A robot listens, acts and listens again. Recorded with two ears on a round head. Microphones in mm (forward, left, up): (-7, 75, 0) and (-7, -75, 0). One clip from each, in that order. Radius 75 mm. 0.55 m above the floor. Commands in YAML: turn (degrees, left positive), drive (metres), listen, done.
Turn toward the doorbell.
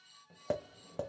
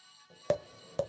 listen: true
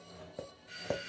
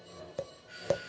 turn: 25
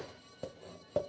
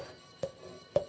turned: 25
listen: true
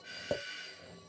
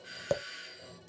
done: "Facing the doorbell, 2 to 4 m away."